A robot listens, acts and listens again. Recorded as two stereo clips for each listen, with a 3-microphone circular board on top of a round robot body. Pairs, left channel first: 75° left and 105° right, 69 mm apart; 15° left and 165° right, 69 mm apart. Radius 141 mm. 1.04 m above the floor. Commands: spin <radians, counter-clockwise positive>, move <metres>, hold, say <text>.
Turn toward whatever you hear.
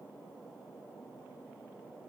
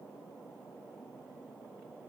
hold
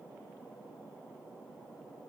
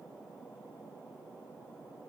hold
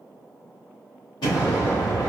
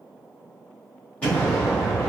spin 1.48
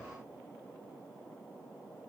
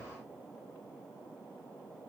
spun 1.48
say I heard an explosion from this way, but can't make it out now.